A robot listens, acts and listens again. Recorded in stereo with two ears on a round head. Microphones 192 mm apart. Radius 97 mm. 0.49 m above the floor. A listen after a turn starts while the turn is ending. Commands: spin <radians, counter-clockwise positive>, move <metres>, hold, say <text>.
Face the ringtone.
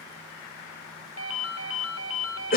spin 1.31
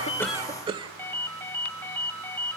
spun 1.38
spin 0.17
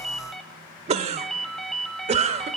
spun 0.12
say Facing the ringtone.